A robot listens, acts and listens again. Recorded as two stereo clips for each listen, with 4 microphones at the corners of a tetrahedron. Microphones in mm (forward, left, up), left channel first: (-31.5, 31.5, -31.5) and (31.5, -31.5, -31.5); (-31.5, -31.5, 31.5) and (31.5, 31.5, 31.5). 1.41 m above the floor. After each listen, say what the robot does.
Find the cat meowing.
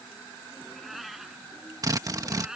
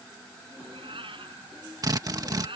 Turn 40° left.
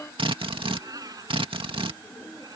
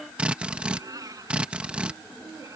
Found it: a cat meowing, straight ahead.